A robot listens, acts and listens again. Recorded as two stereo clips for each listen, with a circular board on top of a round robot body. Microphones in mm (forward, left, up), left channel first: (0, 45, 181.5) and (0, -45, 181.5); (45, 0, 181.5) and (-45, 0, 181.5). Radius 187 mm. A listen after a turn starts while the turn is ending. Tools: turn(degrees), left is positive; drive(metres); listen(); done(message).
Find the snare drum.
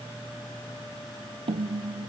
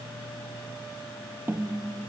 turn(degrees=-115)
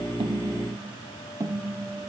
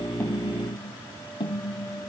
turn(degrees=-30)
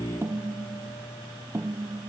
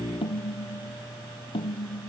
turn(degrees=-20)
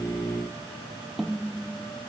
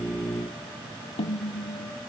done("Found it: a snare drum, straight ahead.")